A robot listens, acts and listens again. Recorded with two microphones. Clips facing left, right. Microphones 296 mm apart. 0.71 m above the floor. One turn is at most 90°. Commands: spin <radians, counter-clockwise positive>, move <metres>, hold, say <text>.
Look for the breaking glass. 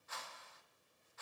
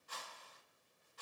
hold
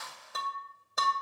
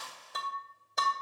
spin 0.52
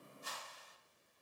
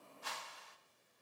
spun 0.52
hold
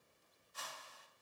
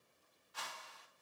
say I heard breaking glass, but can't make it out now. It was about 30° right or 150° left.